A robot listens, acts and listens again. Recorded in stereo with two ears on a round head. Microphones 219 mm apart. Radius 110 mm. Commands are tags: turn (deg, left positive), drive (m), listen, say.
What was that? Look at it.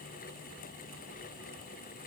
<listen/>
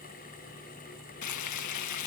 <turn deg="90"/>
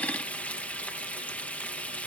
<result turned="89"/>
<say>Facing the frying.</say>